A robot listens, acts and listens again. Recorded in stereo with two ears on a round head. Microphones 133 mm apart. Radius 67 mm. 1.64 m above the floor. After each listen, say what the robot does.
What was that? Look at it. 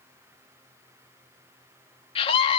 Turn 40° left.
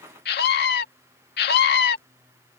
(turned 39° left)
Turn 100° left.
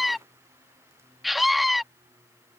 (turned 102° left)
Found it: a scream, straight ahead.